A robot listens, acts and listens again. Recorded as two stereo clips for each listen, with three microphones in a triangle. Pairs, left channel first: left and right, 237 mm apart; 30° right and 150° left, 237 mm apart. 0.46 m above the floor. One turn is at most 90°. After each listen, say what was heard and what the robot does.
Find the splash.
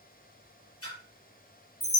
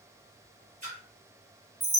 The splash: 95° left. Turn 90° left.
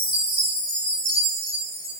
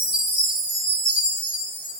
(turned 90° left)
I heard a splash from this way, but can't make it out now.